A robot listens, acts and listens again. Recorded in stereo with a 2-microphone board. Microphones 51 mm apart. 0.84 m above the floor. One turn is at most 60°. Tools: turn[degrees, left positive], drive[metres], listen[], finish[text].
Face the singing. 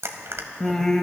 Action: turn[30]
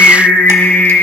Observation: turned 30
Thought: So it is at 135° left.
Action: turn[60]
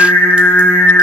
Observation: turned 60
Thought: The singing is now 80° left.
Action: turn[60]
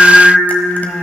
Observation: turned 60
Thought: The singing is now 15° left.
Action: turn[15]
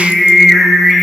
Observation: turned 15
Action: finish[Facing the singing.]